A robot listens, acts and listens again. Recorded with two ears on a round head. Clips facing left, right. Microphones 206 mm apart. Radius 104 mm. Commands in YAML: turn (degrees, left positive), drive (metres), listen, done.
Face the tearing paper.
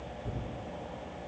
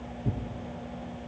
turn: -45
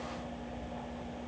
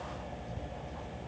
listen: true
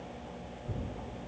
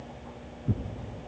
turn: -85
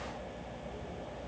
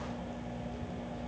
listen: true
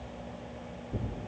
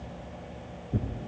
turn: -15
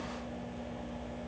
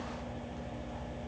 listen: true
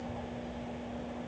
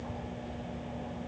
listen: true
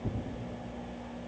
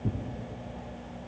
done: "Found it: tearing paper, straight ahead, 1 to 2 m away."